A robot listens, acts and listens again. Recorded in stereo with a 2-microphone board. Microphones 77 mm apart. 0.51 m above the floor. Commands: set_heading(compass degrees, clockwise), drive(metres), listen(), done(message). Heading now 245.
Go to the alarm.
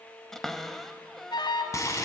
set_heading(155)
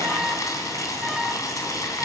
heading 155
drive(1.0)
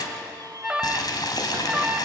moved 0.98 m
set_heading(165)
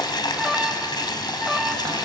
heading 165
drive(1.0)
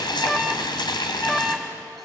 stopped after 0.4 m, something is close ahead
done("I am next to the alarm.")